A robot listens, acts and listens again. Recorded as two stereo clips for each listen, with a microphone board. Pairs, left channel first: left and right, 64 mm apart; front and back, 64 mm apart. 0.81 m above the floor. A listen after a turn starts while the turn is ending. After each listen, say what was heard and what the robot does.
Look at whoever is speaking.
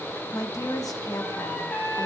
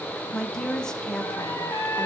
The woman speaking: 80° left. Turn 80° left.
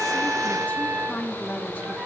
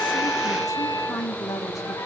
The woman speaking is now 30° left. Turn 30° left.
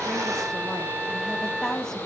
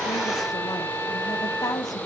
The woman speaking is now 10° left. Turn 10° left.
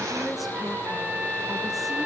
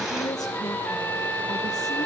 Facing the woman speaking, 1 to 2 m away.